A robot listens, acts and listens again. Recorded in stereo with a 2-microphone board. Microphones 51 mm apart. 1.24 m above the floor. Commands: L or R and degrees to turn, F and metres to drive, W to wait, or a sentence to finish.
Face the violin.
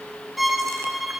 L30
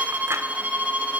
R30
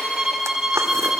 R10
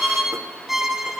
Facing the violin.